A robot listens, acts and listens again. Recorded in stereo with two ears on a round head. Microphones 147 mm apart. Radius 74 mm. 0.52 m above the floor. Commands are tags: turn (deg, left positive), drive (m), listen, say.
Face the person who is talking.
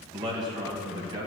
<turn deg="-25"/>
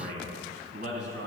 <turn deg="-130"/>
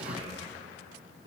<turn deg="-30"/>
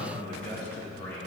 <turn deg="15"/>
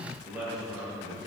<say>Found it: a man speaking, straight ahead.</say>